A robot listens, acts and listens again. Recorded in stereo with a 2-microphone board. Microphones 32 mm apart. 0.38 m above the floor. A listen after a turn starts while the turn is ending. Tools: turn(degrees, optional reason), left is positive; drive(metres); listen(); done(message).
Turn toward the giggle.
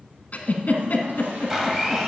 turn(degrees=55, reason="The giggle: about 55° left or 125° left.")
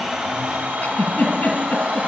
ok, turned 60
turn(degrees=65, reason="So it is at 65° left.")
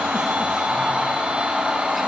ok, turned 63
listen()
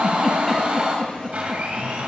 done("Facing the giggle.")